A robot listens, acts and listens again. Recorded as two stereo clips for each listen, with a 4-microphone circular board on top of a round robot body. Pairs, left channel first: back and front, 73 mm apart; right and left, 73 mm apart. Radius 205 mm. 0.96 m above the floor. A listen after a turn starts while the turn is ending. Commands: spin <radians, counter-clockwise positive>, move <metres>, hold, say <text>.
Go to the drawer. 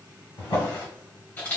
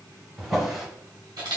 spin 2.97
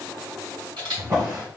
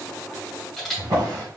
spin 0.87
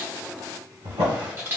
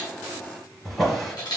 move 1.0
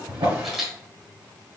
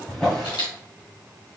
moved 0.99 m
spin -0.17
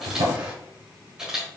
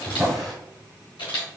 move 1.0
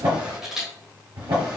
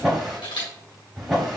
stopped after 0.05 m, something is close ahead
say Arrived at the drawer, straight ahead.